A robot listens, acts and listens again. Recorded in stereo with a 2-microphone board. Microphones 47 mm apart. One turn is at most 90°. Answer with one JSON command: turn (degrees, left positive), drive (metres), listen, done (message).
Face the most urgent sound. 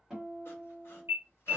{"turn": -55}
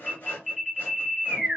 {"done": "Facing the alarm."}